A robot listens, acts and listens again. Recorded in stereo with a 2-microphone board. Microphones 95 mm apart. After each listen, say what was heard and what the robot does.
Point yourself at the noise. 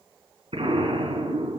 The explosion: about 70° right or 110° right. Turn 70° right.
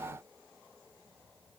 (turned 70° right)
Keep listening.
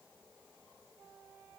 I heard an explosion, but can't make it out now. It was about straight ahead or 40° right.